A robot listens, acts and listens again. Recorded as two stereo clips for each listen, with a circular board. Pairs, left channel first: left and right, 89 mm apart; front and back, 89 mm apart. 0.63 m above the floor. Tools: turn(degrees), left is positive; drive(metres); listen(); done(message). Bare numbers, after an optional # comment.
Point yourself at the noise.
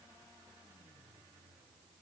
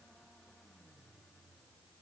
listen()
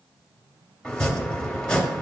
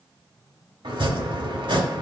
# The chopping: 170° left.
turn(170)
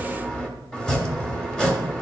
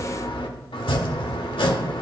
# The chopping is now 10° left.
turn(10)
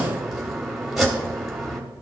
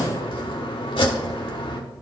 done("Found it: chopping, straight ahead, 1 to 2 m away.")